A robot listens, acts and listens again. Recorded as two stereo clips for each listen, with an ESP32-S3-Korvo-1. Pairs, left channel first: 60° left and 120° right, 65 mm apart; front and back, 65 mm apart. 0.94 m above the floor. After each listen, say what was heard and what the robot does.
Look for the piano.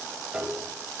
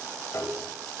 The piano: 40° right. Turn 40° right.
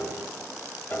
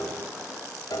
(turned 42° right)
Found it: a piano, straight ahead.